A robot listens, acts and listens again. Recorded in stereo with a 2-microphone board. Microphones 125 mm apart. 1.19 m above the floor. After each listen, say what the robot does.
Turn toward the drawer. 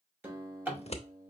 Turn 15° right.
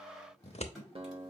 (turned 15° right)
Found it: a drawer, straight ahead, 2 to 4 m away.